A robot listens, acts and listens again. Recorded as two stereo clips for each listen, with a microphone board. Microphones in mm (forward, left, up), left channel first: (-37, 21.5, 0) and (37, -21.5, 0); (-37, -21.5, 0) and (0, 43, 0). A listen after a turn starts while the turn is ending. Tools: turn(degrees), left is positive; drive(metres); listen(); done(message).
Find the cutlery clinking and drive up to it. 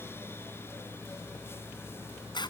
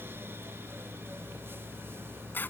listen()
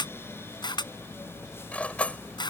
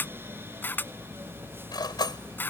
turn(degrees=-140)
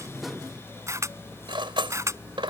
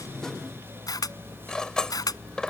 turn(degrees=-40)
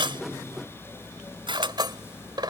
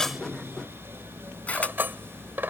drive(metres=1.0)
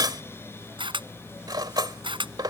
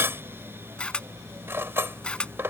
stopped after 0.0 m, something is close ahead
done("Blocked. The cutlery clinking is further on, straight ahead.")